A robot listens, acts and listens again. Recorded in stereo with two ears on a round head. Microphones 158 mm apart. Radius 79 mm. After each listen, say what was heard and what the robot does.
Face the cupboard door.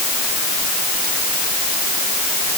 Keep listening.
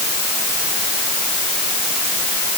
Keep listening.
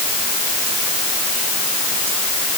I can't make out a cupboard door.